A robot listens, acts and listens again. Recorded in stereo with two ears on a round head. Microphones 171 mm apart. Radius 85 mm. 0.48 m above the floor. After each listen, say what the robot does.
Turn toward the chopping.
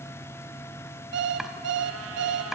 Turn 30° right.
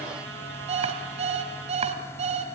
Keep listening.
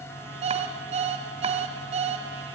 Keep listening.
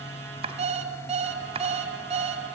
Turn 145° right.
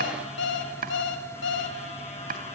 Turn 45° right.
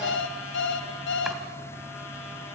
Keep listening.
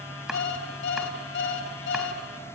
Found it: chopping, straight ahead, 1 to 2 m away.